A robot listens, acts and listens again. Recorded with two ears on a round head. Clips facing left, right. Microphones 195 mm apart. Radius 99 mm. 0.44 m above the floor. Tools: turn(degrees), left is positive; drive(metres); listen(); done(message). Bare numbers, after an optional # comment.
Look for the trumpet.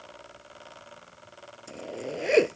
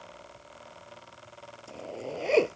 listen()
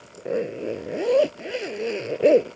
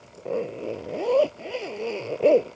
listen()
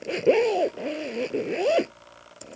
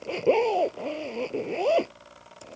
done("I can't make out a trumpet to turn to.")